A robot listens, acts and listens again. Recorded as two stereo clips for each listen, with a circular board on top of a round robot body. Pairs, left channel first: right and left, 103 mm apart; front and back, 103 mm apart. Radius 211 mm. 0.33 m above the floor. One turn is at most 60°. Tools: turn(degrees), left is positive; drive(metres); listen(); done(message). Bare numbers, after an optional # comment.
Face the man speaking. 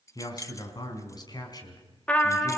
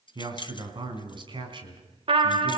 # The man speaking: 140° right.
turn(-60)
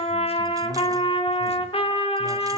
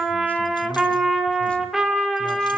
# Nothing new. It was at 80° right.
turn(-60)
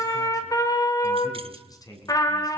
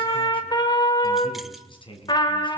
# The man speaking is now 35° right.
turn(-35)
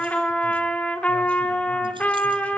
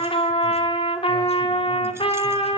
listen()
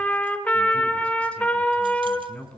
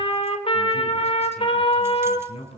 # The man speaking is now 10° right.
turn(-10)
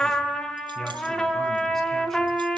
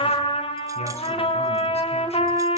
listen()
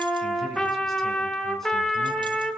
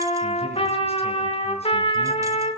listen()
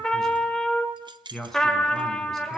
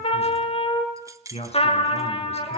done("Facing the man speaking, over 4 m away.")